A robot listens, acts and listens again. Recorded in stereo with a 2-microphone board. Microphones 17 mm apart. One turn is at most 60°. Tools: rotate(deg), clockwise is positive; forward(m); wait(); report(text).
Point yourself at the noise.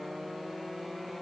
wait()
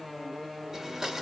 rotate(35)
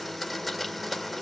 report("Facing the blender.")